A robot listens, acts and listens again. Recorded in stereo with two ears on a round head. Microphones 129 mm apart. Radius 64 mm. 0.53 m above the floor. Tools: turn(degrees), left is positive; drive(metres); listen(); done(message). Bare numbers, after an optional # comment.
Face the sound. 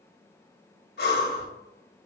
turn(90)
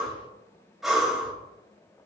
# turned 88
done("Facing the breathing, 1 to 2 m away.")